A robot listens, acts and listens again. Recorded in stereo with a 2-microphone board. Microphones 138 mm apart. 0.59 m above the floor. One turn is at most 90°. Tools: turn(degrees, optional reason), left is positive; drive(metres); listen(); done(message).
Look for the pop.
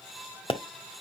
turn(degrees=35, reason="The pop: about 35° left or 145° left.")
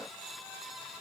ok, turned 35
listen()
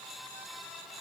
done("I heard a pop, but can't make it out now. It was about straight ahead or 110° left.")